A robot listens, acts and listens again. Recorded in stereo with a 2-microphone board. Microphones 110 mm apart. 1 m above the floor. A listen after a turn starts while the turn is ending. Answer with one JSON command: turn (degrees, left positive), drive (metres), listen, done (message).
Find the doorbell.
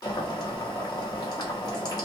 {"listen": true}
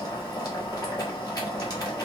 {"listen": true}
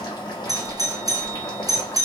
{"turn": -35}
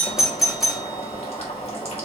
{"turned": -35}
{"done": "Found it: a doorbell, straight ahead."}